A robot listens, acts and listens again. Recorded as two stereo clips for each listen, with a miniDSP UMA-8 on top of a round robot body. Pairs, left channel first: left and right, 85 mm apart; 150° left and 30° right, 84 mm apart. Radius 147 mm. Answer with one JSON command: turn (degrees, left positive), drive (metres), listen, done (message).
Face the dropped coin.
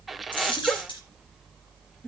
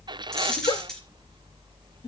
{"turn": 65}
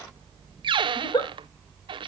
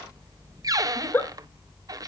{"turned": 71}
{"done": "Facing where the dropped coin came from. I can't hear it now."}